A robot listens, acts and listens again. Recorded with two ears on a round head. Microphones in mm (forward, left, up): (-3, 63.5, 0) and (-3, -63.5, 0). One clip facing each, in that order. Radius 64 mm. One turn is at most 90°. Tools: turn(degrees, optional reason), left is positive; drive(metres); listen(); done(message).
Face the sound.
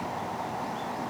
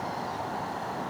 listen()
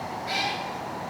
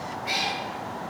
turn(degrees=-20, reason="The cat meowing: about 20° right or 160° right.")
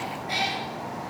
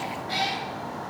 turn(degrees=20, reason="So it is at 20° left.")
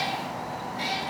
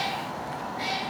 turn(degrees=35, reason="The cat meowing is now 35° left.")
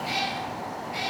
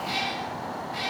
turn(degrees=20, reason="The cat meowing is now 20° left.")
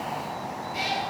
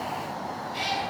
done("Found it: a cat meowing, straight ahead.")